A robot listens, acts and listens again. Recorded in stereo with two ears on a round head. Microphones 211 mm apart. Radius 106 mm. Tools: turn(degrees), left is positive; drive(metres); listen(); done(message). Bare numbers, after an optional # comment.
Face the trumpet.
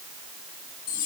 listen()
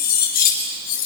listen()
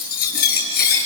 done("I can't make out a trumpet to turn to.")